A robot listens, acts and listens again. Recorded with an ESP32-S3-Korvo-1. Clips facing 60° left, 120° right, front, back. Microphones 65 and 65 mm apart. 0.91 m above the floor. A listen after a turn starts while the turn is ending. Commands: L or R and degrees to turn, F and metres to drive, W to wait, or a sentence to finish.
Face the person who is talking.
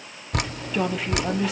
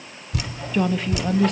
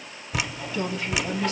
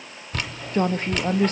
L145
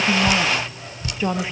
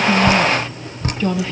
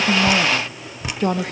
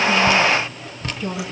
R15
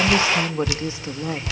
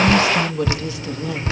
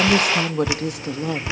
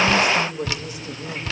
Found it: a woman speaking, straight ahead, 1 to 2 m away.